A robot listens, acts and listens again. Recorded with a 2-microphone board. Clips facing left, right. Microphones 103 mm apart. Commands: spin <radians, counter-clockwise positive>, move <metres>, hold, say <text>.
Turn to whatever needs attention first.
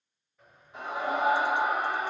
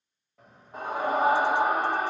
spin -0.79
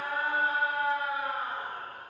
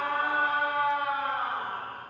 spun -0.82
spin -1.48
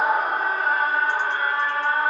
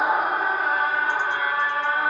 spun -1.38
say Facing the scream.